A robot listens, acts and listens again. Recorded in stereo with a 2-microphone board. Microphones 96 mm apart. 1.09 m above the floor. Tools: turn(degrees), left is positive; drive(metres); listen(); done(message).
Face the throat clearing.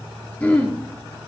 turn(degrees=15)
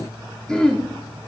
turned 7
turn(degrees=30)
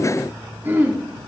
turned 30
turn(degrees=-20)
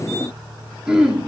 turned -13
turn(degrees=-10)
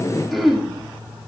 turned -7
done("Found it: throat clearing, straight ahead, 2 to 4 m away.")